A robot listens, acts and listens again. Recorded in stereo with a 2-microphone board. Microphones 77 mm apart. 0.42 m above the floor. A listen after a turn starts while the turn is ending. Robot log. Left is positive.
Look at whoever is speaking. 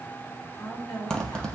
note: The woman speaking: about 65° left or 115° left.
cmd yaw +65
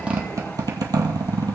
cmd idle
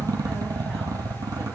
cmd idle
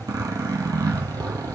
end: I heard a woman speaking, but can't make it out now. It was about straight ahead or 50° left.